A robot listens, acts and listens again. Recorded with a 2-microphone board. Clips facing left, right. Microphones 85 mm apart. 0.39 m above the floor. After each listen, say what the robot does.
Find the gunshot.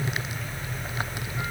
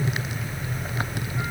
Keep listening.
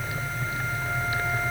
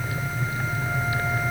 Keep listening.
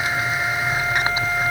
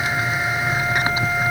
I can't make out a gunshot.